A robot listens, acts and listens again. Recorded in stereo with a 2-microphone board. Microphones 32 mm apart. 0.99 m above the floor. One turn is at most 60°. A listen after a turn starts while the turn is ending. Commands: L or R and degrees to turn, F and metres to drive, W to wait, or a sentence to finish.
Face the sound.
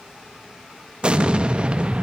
R30
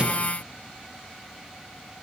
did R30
W
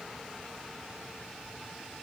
I heard an explosion, but can't make it out now. It was about straight ahead or 120° right.